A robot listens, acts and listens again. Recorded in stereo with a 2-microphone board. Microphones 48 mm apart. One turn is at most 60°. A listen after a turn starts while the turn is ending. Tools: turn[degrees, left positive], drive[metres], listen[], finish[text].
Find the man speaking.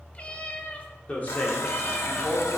Thought: The man speaking: about 50° left or 130° left.
Action: turn[50]
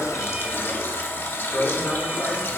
Thought: So it is at 50° left.
Action: turn[50]
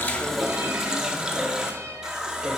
Action: listen[]
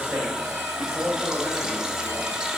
Thought: The man speaking is now 35° right.
Action: turn[-35]
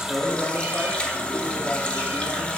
Action: listen[]
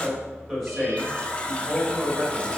Action: finish[Facing the man speaking.]